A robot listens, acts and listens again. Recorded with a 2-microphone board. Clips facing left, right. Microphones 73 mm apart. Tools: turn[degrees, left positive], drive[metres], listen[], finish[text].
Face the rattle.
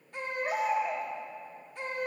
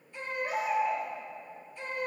Action: listen[]
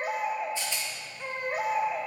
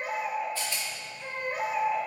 Thought: The rattle: about 20° left or 160° left.
Action: turn[20]
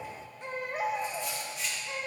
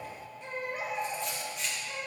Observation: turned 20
Action: finish[Facing the rattle.]